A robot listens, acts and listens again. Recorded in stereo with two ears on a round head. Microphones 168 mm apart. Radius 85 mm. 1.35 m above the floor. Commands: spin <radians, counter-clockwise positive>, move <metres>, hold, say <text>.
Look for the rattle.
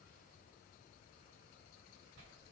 hold
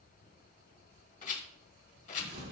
spin 0.79
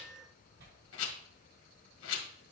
spin 1.57
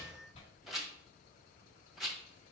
say Found it: a rattle, straight ahead, 1 to 2 m away.